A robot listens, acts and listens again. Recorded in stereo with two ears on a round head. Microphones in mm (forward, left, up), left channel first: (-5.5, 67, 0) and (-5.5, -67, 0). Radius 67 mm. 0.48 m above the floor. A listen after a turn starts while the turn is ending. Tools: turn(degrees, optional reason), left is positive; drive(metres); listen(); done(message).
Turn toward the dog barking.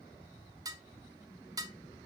listen()
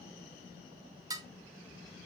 listen()
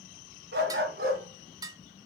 turn(degrees=-70, reason="The dog barking: about 70° right or 110° right.")
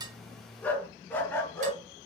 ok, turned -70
turn(degrees=15, reason="So it is at 15° left.")
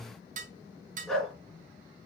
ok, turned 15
done("Found it: a dog barking, straight ahead, 2 to 4 m away.")